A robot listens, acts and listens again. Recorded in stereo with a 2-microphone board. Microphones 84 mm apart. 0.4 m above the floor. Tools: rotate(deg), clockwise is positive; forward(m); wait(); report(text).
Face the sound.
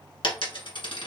rotate(-90)
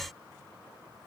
report("Facing where the dropped coin came from. I can't hear it now.")